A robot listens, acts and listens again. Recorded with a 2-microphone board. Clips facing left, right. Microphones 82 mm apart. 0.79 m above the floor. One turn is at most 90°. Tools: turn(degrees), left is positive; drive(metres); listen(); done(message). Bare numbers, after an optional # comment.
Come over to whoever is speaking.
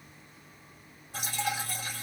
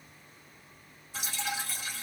listen()
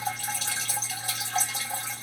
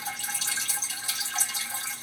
listen()
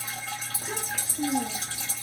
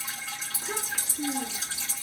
turn(90)
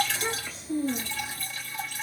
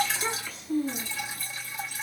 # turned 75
# So it is at 20° left.
turn(20)
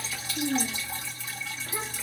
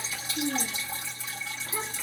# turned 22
drive(1.0)
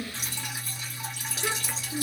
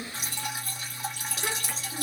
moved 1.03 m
drive(1.0)
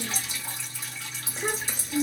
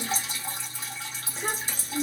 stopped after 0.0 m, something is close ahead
done("I am next to the child speaking.")